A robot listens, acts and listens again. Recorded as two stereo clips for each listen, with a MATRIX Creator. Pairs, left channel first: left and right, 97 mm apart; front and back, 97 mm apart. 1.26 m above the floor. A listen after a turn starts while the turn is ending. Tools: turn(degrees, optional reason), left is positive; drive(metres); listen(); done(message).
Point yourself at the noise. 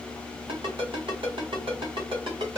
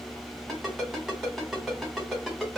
turn(degrees=-95, reason="The ringtone: 95° right.")
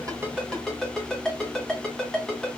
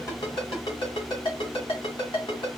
done("Facing the ringtone.")